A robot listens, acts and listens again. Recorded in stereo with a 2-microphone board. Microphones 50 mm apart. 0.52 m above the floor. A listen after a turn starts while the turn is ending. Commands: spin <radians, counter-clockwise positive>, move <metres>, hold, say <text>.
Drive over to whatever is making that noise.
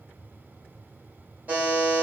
spin -0.61
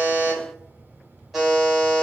move 1.0
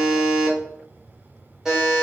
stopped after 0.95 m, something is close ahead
spin -0.26
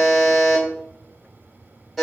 say I am next to the buzzer.